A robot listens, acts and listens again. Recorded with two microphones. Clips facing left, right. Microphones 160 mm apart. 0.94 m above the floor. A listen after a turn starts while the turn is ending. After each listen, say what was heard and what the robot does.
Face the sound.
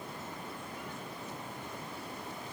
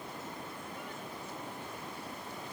Keep listening.
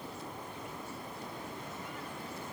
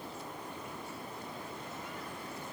Keep listening.
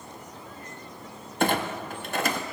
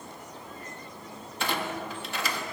The clunk: about 50° left or 130° left. Turn 50° left.
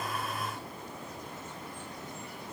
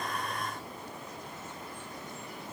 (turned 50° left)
Keep listening.
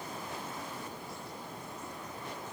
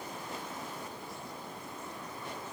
I heard a clunk, but can't make it out now. It was about straight ahead or 80° left.